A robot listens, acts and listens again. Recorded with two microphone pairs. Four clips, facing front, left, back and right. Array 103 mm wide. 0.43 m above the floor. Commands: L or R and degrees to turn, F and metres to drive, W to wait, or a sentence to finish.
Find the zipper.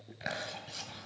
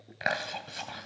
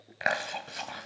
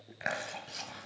W
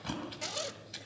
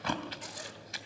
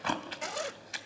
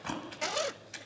R105
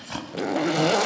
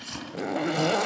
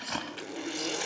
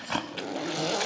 L20
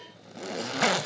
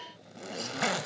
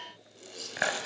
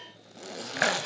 Facing the zipper.